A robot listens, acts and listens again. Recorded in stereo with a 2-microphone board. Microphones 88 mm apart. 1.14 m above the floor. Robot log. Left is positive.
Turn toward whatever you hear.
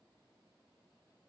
cmd idle
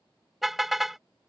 cmd yaw +30
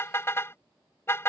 note: So it is at 150° left.
cmd yaw +150
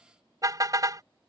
note: The car horn is now 45° right.
cmd yaw -45
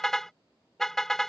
end: Found it: a car horn, straight ahead.